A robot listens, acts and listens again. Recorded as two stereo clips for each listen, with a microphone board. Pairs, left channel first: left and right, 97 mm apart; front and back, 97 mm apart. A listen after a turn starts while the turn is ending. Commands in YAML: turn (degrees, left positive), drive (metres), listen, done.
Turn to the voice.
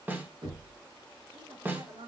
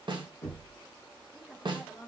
turn: -100
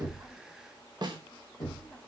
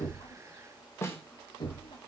listen: true
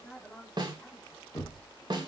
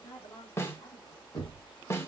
done: "Found it: a woman speaking, straight ahead, 2 to 4 m away."